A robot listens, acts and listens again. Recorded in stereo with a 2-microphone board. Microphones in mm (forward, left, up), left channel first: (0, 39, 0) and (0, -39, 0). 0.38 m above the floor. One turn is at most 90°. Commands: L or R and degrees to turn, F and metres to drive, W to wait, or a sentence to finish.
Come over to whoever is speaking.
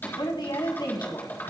L70
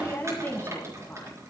L30
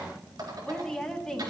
L10
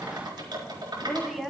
F1.0
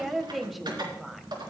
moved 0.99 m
F1.0
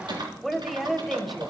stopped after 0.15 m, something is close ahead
I am next to the woman speaking.